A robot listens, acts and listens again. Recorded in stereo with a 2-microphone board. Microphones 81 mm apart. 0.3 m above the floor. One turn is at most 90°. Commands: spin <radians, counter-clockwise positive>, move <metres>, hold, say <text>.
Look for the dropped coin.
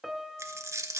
spin -0.61
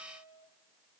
hold
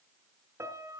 say I heard a dropped coin, but can't make it out now. It was about straight ahead or 110° right.